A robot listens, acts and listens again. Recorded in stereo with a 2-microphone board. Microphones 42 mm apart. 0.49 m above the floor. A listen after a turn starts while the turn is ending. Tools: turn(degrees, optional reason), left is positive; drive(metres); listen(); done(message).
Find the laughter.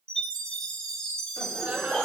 turn(degrees=-45, reason="The laughter: about 45° right or 135° right.")
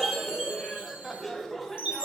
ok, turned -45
done("Found it: laughter, straight ahead, 2 to 4 m away.")